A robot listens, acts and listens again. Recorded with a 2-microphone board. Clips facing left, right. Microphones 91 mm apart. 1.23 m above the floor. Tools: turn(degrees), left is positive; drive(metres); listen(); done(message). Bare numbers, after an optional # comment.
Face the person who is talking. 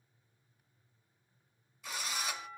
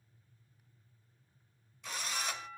listen()
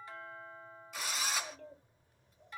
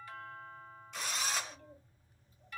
# The child speaking: about 65° left or 115° left.
turn(65)
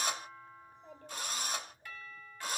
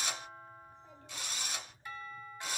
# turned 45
# So it is at 55° left.
turn(55)
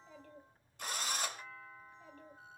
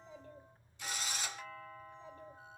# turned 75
# The child speaking is now 20° right.
turn(-20)
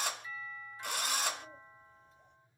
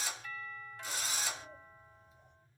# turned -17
done("Found it: a child speaking, straight ahead.")